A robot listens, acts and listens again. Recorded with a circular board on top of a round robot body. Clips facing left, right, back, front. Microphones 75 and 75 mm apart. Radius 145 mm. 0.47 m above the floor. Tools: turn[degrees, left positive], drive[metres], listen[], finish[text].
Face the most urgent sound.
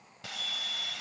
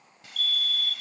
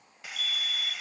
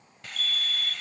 Thought: The fire alarm: 25° left.
Action: turn[25]
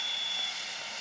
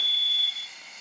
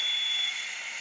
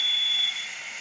Thought: The fire alarm is now 20° left.
Action: turn[20]
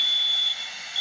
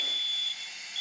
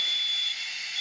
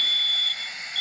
Thought: The fire alarm is now 10° right.
Action: turn[-10]
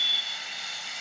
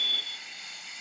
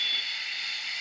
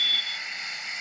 Action: finish[Facing the fire alarm.]